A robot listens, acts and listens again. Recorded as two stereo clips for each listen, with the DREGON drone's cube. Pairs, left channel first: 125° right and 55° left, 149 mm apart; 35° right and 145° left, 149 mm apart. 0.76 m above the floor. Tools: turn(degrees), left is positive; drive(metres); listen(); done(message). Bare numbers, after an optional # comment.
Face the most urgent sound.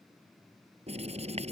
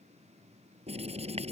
listen()
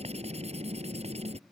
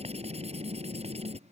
listen()
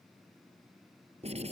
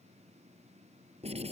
done("I can't make out anything urgent, only writing.")